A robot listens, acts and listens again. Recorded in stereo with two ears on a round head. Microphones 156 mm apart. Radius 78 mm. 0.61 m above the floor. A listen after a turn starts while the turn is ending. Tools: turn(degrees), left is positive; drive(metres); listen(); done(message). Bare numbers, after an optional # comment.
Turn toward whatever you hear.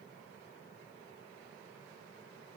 listen()
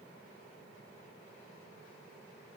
listen()
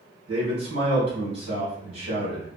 # The man speaking: about 35° right or 145° right.
turn(-35)
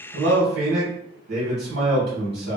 # So it is at 105° right.
turn(-105)
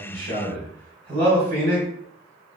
# The man speaking is now 40° right.
turn(-40)
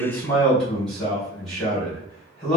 done("Found it: a man speaking, straight ahead.")